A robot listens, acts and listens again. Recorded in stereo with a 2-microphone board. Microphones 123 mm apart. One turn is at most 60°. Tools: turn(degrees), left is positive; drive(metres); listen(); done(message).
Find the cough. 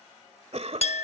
turn(degrees=-60)
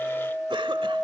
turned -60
listen()
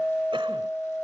listen()
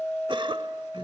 turn(degrees=-50)
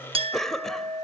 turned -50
done("Found it: a cough, straight ahead.")